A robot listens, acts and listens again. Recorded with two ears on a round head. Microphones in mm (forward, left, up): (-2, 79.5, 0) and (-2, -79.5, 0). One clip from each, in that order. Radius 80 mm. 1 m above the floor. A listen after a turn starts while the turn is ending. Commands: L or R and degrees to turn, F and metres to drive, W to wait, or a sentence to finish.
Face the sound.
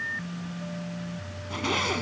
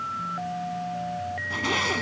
R30
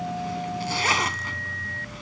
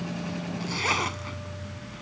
L25
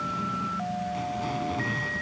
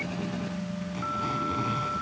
W
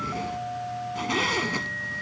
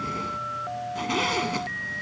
Facing the zipper.